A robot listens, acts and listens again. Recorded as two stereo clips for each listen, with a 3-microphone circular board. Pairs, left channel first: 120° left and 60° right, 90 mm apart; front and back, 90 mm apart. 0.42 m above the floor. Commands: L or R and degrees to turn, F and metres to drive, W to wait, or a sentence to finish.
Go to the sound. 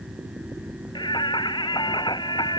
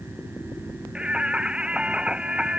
L105
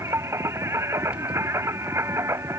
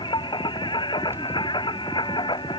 F1.0
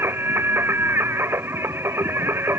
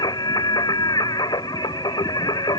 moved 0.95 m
F1.0
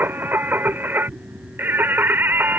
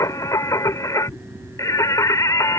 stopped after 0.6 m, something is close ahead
R10
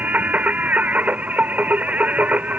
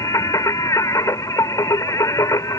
Arrived at the singing, straight ahead.